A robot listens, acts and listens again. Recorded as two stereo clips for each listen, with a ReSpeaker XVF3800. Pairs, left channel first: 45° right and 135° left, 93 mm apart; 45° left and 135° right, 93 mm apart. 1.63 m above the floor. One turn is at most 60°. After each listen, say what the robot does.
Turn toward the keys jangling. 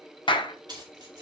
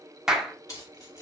Turn 60° left.
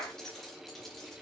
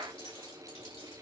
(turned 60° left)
Turn 40° left.
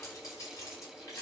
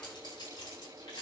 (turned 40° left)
Turn 10° left.
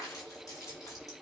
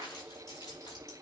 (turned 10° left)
Found it: keys jangling, straight ahead.